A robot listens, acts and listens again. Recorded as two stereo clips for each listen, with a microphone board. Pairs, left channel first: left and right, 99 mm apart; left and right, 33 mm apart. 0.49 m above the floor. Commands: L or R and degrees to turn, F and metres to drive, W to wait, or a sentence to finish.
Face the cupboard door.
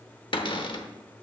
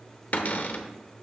L55
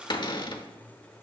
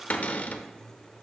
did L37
L60
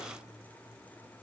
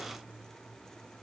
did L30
L30
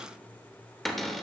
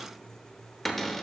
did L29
Found it: a cupboard door, straight ahead.